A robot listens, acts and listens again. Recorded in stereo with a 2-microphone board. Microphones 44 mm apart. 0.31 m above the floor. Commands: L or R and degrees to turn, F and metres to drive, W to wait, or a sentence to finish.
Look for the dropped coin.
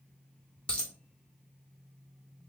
L25
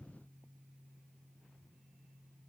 W
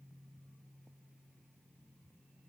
I heard a dropped coin, but can't make it out now. It was about straight ahead or 130° left.